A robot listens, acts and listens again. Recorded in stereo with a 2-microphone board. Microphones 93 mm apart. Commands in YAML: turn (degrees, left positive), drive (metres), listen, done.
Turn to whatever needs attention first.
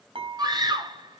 turn: -50
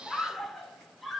done: "Facing the scream."